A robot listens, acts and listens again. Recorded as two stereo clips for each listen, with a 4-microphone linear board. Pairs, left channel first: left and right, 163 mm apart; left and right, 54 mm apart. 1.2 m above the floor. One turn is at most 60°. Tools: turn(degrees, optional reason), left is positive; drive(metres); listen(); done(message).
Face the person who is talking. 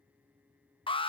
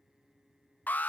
listen()
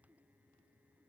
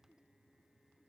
listen()
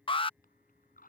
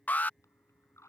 turn(degrees=60, reason="The man speaking: about 60° left or 120° left.")
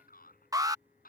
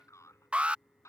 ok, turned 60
turn(degrees=60, reason="So it is at 65° left.")
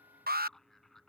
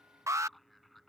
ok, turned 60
done("Facing the man speaking.")